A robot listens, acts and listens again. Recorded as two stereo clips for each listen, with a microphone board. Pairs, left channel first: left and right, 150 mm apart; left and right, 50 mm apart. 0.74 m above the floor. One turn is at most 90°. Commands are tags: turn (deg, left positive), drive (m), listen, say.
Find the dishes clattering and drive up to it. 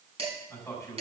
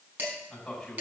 <turn deg="-40"/>
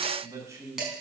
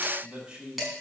<drive m="1.0"/>
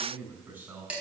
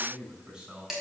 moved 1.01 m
<turn deg="-10"/>
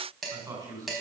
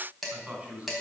<drive m="1.0"/>
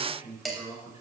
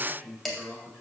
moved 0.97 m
<drive m="1.0"/>
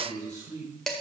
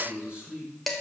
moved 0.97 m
<drive m="1.0"/>
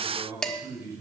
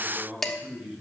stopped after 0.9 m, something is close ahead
<say>Arrived at the dishes clattering, straight ahead.</say>